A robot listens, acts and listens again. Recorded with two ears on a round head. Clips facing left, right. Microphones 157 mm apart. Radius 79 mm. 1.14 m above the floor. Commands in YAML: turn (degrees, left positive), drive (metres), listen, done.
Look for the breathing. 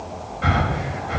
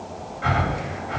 turn: 50
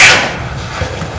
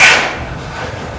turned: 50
done: "Facing the breathing, over 4 m away."